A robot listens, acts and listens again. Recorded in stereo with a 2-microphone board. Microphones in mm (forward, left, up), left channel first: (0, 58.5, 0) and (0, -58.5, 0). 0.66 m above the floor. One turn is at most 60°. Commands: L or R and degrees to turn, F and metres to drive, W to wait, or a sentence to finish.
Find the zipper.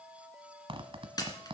R45
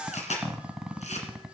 Facing the zipper.